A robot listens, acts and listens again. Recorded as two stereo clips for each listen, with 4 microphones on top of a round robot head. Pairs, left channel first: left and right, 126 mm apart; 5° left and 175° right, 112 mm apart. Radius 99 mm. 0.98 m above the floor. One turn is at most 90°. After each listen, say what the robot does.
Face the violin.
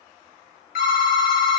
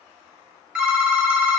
Keep listening.
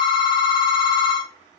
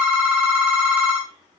Keep listening.
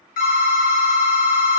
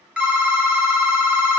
I can't make out a violin, only a phone ringing.